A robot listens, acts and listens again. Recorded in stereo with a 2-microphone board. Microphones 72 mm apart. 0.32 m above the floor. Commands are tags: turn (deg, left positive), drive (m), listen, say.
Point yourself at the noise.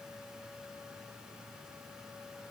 <listen/>
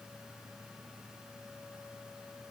<listen/>
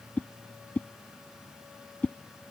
<turn deg="20"/>
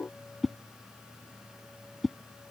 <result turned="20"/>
<say>Found it: a whoosh, straight ahead.</say>